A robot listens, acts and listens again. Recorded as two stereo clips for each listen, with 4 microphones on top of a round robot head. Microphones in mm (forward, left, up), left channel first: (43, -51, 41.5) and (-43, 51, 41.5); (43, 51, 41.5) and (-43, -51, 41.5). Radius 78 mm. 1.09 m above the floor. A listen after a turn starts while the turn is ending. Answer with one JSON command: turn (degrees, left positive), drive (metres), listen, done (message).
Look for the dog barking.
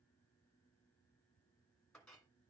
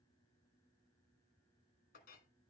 {"listen": true}
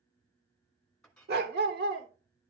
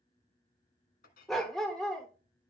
{"turn": 135}
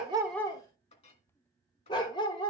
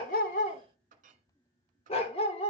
{"done": "Facing the dog barking, 1 to 2 m away."}